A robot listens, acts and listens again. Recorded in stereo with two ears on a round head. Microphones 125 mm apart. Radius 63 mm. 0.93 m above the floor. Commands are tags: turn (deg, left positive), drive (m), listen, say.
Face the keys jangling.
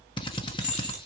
<turn deg="55"/>
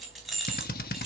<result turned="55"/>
<say>Found it: keys jangling, straight ahead, over 4 m away.</say>